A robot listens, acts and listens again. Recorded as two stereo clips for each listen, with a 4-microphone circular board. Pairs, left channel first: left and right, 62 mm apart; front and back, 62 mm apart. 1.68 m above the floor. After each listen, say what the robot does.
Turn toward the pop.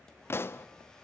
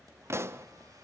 Turn 140° left.
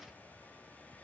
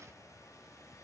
Facing where the pop came from. I can't hear it now.